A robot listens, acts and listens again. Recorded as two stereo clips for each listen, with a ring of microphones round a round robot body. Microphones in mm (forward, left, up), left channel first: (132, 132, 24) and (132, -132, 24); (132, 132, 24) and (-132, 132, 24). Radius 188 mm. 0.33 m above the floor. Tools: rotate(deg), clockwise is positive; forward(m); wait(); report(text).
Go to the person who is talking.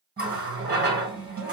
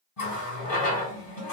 wait()
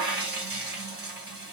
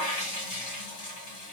wait()
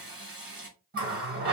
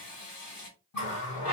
report("I can't make out anyone speaking, only a running tap.")